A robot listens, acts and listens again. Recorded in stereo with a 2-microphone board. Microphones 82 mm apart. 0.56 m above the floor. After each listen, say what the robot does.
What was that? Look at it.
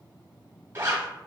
Turn 35° right.
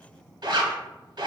Turn 110° right.
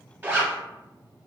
Turn 25° right.
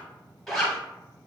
Found it: a zipper, straight ahead, under 1 m away.